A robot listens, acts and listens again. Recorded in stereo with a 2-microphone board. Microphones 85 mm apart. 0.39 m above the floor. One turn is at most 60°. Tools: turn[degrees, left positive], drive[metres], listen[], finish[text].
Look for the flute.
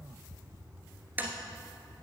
Action: listen[]
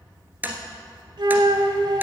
Thought: The flute: about 70° right or 110° right.
Action: turn[-60]
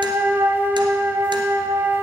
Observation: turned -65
Thought: So it is at 25° right.
Action: turn[-25]
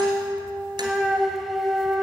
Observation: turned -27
Action: finish[Found it: a flute, straight ahead, under 1 m away.]